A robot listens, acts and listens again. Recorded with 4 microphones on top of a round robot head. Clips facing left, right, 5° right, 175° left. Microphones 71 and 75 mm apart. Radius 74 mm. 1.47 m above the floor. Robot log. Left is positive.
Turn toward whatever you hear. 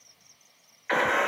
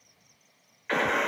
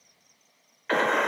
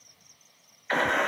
note: The gunshot: 10° left.
cmd yaw +10
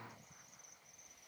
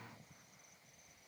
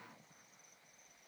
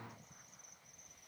end: I heard a gunshot from this way, but can't make it out now.